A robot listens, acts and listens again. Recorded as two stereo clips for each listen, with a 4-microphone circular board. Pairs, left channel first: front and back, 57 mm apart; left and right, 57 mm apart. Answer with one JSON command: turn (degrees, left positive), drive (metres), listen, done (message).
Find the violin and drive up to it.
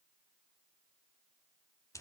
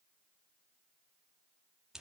{"listen": true}
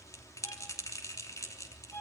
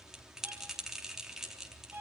{"turn": -50}
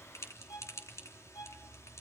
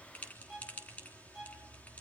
{"turn": -10}
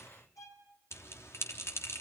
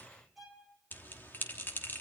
{"drive": 1.0}
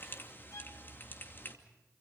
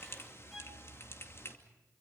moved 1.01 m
{"drive": 1.0}
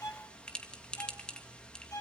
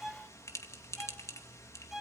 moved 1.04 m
{"drive": 1.0}
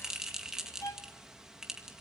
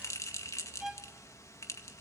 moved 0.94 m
{"turn": -10}
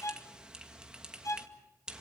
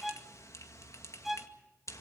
{"drive": 1.0}
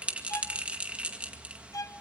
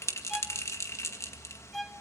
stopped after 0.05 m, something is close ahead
{"done": "I am next to the violin."}